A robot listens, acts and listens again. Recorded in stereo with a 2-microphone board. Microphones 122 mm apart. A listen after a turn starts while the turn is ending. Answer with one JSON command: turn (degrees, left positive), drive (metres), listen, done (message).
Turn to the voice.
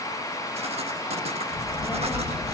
{"turn": -30}
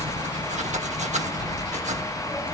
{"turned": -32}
{"turn": 20}
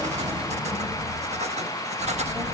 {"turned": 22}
{"done": "Found it: a child speaking, straight ahead, over 4 m away."}